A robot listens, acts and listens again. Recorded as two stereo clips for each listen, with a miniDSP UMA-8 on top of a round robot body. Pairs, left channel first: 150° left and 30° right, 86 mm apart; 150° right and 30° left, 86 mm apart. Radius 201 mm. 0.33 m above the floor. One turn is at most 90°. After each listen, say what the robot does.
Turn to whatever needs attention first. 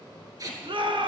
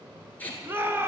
Turn 35° right.
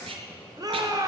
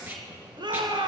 Turn 10° left.
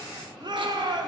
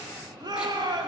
Facing the shout, 1 to 2 m away.